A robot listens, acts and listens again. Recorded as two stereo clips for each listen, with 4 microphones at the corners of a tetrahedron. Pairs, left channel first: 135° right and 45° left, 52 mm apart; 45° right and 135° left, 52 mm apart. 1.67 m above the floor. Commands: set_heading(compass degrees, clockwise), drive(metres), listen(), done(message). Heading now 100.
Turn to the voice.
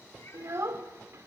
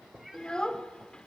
set_heading(75)
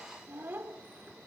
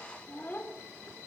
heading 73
done("Found it: a child speaking, straight ahead, 2 to 4 m away.")